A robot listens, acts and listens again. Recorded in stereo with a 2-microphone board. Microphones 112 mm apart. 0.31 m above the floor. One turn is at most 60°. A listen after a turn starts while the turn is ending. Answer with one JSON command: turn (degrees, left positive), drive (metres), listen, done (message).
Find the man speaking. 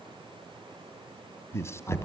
{"turn": 25}
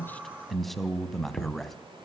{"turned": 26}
{"done": "Found it: a man speaking, straight ahead."}